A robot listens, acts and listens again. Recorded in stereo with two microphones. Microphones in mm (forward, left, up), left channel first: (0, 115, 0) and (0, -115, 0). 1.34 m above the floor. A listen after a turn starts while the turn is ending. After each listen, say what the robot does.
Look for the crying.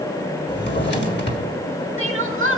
Turn 60° right.
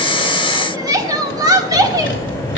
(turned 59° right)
Turn 20° right.
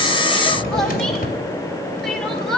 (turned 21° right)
Facing the crying.